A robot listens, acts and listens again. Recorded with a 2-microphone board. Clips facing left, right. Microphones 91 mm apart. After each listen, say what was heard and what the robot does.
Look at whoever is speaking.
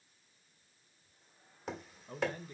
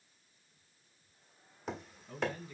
The man speaking: about 35° left or 145° left. Turn 35° left.
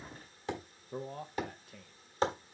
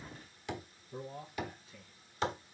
So it is at 105° left. Turn 105° left.
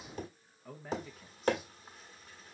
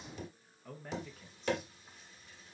Facing the man speaking.